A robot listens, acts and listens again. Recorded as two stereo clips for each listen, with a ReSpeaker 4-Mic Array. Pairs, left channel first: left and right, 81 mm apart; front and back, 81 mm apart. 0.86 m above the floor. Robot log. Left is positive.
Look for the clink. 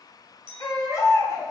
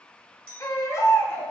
note: The clink: 75° right.
cmd yaw -75
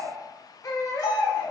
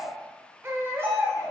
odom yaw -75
cmd idle
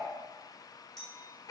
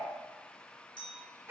end: Found it: a clink, straight ahead.